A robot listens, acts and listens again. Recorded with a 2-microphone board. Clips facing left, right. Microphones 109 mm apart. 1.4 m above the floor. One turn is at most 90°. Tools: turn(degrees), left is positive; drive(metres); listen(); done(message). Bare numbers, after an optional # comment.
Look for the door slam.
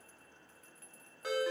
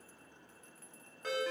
listen()
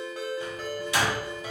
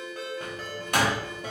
# The door slam: about 60° right or 120° right.
turn(-60)
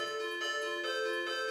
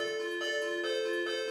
listen()
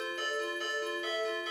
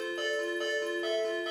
done("I heard a door slam, but can't make it out now. It was about straight ahead or 60° right.")